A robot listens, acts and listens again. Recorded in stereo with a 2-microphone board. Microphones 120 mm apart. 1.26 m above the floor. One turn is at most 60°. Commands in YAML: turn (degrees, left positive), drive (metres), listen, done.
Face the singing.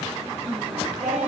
turn: -60
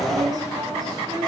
turn: -35
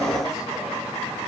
listen: true
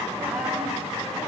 turn: -10
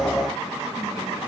listen: true
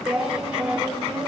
turn: -10
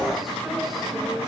listen: true
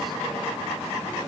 listen: true
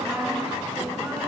done: "Found it: singing, straight ahead."